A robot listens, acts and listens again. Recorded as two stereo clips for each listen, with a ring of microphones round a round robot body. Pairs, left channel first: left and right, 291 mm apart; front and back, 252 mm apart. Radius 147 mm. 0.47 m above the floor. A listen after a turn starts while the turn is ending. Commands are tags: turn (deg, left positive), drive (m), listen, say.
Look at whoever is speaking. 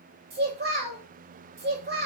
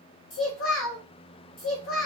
<turn deg="-35"/>
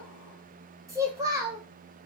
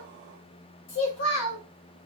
<turn deg="-10"/>
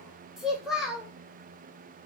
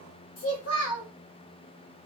<say>Facing the child speaking, 1 to 2 m away.</say>